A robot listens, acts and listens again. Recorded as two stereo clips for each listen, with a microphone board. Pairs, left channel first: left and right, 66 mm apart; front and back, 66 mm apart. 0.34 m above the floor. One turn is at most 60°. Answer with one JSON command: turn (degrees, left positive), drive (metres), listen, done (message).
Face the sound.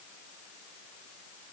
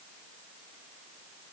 {"listen": true}
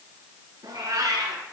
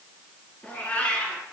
{"turn": -60}
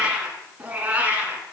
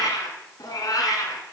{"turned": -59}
{"turn": -25}
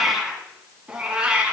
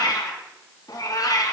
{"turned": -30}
{"turn": -20}
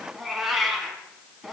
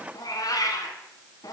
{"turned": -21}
{"done": "Found it: a cat meowing, straight ahead."}